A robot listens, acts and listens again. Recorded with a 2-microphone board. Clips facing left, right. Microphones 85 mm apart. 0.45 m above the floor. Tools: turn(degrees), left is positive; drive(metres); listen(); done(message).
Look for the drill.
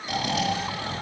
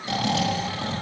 listen()
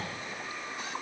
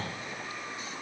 listen()
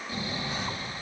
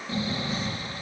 done("I can't make out a drill to turn to.")